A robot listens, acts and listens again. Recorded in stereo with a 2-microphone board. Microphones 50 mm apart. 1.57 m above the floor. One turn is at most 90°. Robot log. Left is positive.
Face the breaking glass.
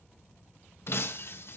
note: The breaking glass: about 55° left or 125° left.
cmd yaw +55
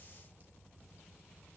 cmd idle
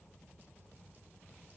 end: I heard breaking glass, but can't make it out now. It was about straight ahead or 70° left.